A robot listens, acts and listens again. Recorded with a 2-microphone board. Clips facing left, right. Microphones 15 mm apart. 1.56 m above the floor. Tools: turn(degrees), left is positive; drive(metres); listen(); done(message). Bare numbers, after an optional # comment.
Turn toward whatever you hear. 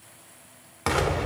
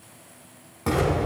# The explosion: about 55° left or 125° left.
turn(55)
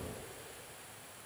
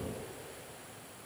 listen()
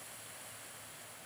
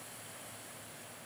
done("I heard an explosion, but can't make it out now. It was about straight ahead or 70° left.")